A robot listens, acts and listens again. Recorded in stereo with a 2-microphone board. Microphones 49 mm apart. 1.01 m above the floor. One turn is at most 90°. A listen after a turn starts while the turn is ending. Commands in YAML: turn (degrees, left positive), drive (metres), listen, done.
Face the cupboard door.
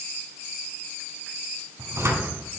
turn: -90
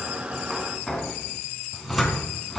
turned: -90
done: "Facing the cupboard door, 2 to 4 m away."